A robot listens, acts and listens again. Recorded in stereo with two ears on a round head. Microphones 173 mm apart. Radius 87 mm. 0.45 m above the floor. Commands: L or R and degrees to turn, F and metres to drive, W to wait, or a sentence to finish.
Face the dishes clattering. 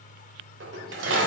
R65
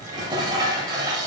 R25
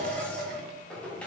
Found it: dishes clattering, straight ahead, 1 to 2 m away.